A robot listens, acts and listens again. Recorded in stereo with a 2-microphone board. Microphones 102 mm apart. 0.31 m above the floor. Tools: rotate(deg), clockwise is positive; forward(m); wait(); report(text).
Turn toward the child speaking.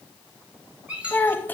rotate(-20)
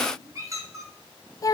rotate(-140)
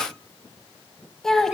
report("Facing the child speaking, under 1 m away.")